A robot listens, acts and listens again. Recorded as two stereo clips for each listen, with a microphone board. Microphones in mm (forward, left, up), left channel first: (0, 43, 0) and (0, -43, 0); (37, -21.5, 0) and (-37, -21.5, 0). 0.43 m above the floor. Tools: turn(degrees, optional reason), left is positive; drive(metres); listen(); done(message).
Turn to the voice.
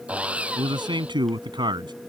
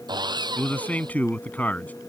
turn(degrees=-70, reason="The man speaking: 70° right.")
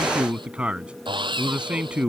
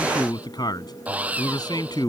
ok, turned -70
turn(degrees=-15, reason="The man speaking is now 15° right.")
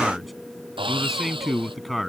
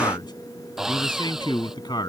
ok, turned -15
done("Found it: a man speaking, straight ahead.")